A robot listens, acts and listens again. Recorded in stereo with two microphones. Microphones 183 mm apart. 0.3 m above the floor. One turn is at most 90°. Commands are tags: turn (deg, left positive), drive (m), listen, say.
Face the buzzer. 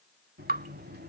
<turn deg="-65"/>
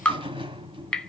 <turn deg="-30"/>
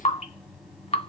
<say>Facing the buzzer, 1 to 2 m away.</say>